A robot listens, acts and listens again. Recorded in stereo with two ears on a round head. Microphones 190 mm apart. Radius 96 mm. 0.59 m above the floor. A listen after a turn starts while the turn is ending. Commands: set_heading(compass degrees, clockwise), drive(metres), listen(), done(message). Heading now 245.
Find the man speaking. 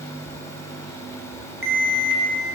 listen()
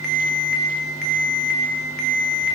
listen()
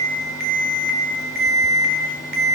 done("I can't make out a man speaking to turn to.")